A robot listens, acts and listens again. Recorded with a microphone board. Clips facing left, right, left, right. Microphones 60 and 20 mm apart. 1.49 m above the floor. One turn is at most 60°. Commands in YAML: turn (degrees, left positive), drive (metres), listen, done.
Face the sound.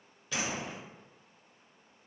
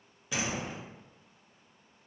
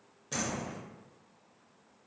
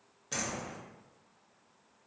turn: -30
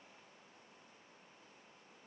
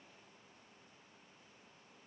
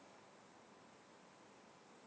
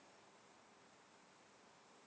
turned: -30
listen: true
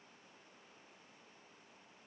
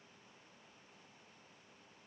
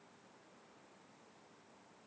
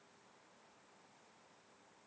done: "I heard a door slam, but can't make it out now. It was about 15° left or 135° right."